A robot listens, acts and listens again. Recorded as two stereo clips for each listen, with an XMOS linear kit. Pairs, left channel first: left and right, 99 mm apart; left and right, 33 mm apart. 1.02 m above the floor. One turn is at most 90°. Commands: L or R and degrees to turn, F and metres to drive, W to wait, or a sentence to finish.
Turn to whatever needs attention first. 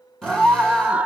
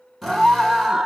R30
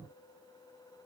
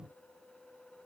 W
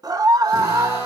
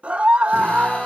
R90
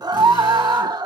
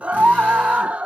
R50
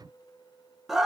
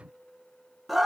Facing the scream, 1 to 2 m away.